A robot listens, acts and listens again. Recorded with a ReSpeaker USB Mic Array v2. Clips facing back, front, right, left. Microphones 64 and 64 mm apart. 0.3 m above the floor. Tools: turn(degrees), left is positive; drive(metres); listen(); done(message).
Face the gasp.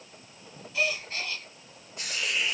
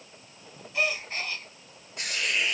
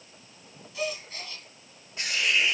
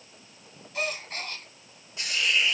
turn(degrees=55)
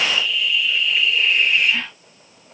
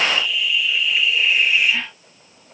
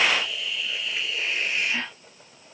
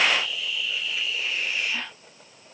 done("I heard a gasp from this way, but can't make it out now.")